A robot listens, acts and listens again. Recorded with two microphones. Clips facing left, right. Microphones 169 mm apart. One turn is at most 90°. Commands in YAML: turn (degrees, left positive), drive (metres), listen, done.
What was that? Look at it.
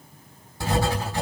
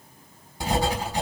turn: -15
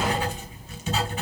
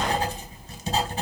turn: -90
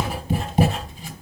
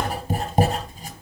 turn: -50
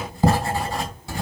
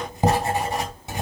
turn: -25
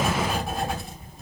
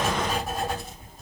done: "Facing the writing, 2 to 4 m away."